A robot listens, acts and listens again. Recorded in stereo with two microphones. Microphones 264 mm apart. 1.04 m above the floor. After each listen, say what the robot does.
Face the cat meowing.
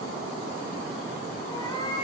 Turn 15° left.
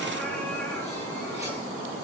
Keep listening.
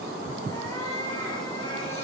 Turn 15° left.
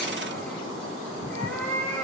Turn 30° left.
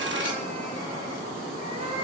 Turn 20° right.
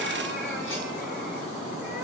Keep listening.
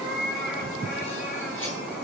Facing the cat meowing.